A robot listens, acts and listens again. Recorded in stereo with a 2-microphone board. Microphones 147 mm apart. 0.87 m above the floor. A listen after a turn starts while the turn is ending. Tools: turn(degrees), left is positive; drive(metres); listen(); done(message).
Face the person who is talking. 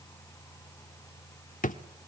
listen()
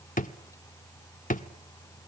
listen()
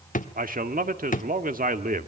turn(degrees=-75)
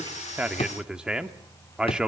done("Facing the man speaking.")